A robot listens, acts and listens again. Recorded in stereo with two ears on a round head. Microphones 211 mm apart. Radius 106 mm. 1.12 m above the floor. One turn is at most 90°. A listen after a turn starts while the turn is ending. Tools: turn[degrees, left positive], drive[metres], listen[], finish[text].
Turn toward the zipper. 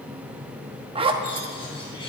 Thought: The zipper: about 25° right or 155° right.
Action: turn[-25]
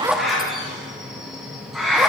Action: listen[]
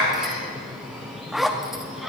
Action: finish[Facing the zipper, under 1 m away.]